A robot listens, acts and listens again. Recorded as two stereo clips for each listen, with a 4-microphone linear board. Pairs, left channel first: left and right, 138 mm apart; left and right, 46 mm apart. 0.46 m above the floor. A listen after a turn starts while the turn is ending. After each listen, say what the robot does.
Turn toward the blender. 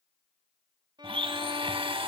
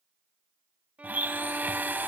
Turn 40° right.
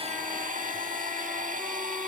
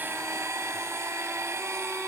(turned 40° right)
Turn 100° right.
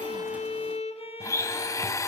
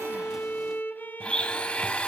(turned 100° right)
Turn 20° left.
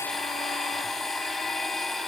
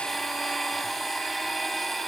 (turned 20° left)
Found it: a blender, straight ahead, under 1 m away.